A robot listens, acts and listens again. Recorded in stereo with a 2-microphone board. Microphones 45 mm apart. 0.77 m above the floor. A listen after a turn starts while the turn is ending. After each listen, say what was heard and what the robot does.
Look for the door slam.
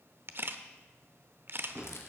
The door slam: about 65° right or 115° right. Turn 65° right.
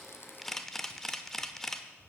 Keep listening.
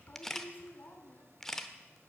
I heard a door slam, but can't make it out now. It was about straight ahead or 50° right.